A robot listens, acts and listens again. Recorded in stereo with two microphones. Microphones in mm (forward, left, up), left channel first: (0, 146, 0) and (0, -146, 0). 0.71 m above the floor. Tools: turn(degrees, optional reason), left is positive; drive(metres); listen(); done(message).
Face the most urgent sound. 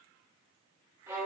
listen()
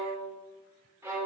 listen()
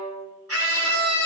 turn(degrees=-55, reason="The scream: about 55° right or 125° right.")
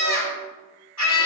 turn(degrees=-70, reason="So it is at 70° right.")
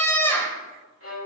turn(degrees=10, reason="The scream is now 10° left.")
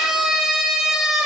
done("Facing the scream.")